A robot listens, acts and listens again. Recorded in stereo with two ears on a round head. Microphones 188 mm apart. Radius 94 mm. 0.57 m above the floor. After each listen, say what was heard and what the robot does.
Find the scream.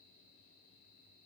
Keep listening.
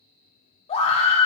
The scream: about 30° left or 150° left. Turn 30° left.
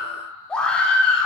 Found it: a scream, straight ahead, 1 to 2 m away.